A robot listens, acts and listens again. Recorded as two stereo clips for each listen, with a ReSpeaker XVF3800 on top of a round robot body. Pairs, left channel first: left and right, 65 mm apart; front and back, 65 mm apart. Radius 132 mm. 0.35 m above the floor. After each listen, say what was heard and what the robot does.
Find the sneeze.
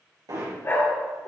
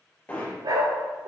Keep listening.
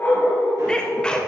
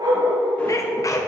The sneeze: 15° left. Turn 15° left.
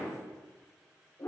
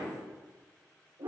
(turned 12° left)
Facing where the sneeze came from. I can't hear it now.